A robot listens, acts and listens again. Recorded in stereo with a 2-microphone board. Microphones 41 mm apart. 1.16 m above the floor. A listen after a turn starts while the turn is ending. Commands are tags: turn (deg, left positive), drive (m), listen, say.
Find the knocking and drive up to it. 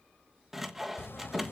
<turn deg="75"/>
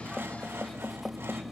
<drive m="1.0"/>
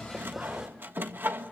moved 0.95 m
<drive m="1.0"/>
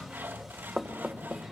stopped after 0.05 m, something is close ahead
<say>Blocked. The knocking is further on, straight ahead.</say>